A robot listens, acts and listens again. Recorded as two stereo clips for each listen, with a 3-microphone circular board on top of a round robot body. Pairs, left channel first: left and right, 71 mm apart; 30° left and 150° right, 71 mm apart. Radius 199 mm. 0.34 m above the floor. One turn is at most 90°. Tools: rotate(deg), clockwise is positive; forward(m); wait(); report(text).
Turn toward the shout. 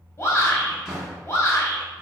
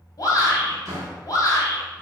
rotate(-50)
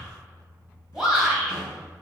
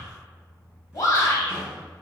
report("Facing the shout.")